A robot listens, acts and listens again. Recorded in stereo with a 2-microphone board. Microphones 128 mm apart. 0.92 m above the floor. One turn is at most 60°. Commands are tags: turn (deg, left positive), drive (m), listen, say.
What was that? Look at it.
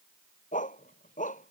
<turn deg="60"/>
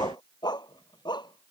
<turn deg="35"/>
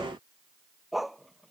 <say>Facing the dog barking.</say>